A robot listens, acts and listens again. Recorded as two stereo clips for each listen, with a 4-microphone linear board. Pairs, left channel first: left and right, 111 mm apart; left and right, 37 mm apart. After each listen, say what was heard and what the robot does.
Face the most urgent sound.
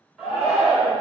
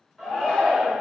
Turn 30° right.
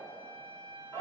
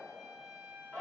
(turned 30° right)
So it is at 25° left. Turn 25° left.
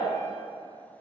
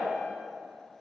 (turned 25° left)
Keep listening.
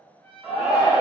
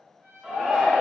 The shout is now 10° right. Turn 10° right.
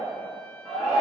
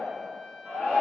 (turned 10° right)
Facing the shout.